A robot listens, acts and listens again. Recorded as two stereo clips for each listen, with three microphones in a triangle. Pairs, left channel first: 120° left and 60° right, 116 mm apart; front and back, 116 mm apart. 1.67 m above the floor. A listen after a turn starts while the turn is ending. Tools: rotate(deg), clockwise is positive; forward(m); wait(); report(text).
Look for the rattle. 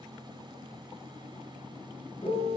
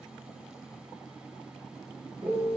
wait()
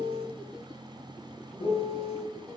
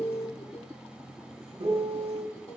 wait()
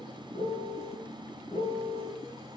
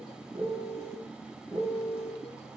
report("I can't make out a rattle to turn to.")